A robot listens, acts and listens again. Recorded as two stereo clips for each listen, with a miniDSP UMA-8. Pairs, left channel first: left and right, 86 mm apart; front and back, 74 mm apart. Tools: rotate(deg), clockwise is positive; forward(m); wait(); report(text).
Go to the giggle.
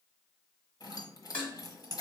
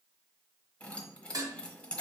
wait()
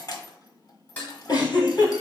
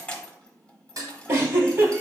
rotate(-130)
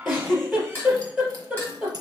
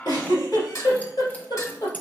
forward(1.0)
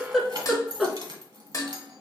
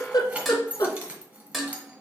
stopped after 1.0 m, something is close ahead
report("I am next to the giggle.")